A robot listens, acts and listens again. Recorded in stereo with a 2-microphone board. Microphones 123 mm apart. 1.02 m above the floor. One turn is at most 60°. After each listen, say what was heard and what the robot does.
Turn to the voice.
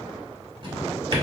Keep listening.
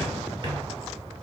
Keep listening.
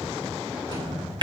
I can't make out anyone speaking, only a drawer.